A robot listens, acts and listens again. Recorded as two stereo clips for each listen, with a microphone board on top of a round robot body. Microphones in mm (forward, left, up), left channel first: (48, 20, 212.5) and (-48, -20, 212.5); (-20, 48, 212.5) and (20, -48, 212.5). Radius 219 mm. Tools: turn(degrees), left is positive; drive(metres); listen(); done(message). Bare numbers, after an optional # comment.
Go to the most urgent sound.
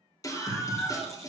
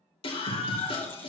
# The scream: 80° left.
turn(80)
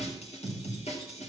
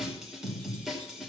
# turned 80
# The scream is now 20° left.
turn(20)
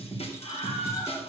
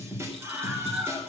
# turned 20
drive(1.0)
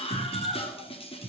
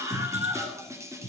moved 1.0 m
drive(1.0)
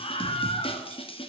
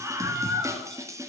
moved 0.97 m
drive(1.0)
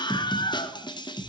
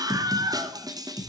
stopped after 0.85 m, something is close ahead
# The scream is now 15° right.
turn(-15)
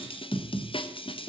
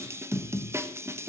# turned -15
done("Arrived at the scream, straight ahead.")